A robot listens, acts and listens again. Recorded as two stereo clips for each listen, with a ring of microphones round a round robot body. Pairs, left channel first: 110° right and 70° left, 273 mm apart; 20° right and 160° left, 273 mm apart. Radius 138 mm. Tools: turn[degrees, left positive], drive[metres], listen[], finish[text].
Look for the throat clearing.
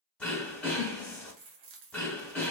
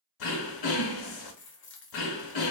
Thought: The throat clearing: 25° right.
Action: turn[-25]
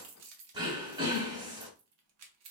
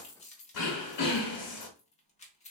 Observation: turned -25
Thought: The throat clearing is now 10° right.
Action: turn[-10]
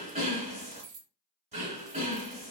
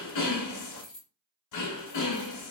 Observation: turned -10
Action: finish[Found it: throat clearing, straight ahead.]